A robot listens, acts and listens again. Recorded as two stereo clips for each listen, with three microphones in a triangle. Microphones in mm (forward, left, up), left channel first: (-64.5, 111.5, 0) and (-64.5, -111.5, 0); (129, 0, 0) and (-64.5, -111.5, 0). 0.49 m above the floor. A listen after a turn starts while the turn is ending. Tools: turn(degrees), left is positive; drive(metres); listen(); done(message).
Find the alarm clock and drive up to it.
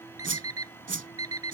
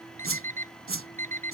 turn(degrees=-95)
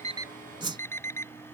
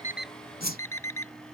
turn(degrees=10)
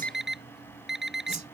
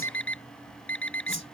drive(metres=1.0)
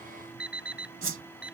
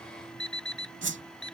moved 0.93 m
drive(metres=1.0)
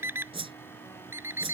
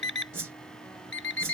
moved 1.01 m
turn(degrees=-10)
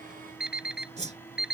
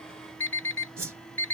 drive(metres=1.0)
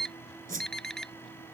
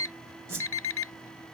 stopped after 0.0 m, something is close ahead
done("I am next to the alarm clock.")